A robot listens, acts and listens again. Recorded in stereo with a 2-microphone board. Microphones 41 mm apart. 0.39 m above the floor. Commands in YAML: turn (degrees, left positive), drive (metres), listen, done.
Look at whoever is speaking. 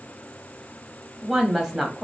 turn: -30
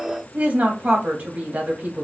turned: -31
turn: -135
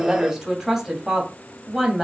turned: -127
turn: -10
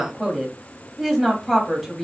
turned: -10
done: "Facing the woman speaking, 2 to 4 m away."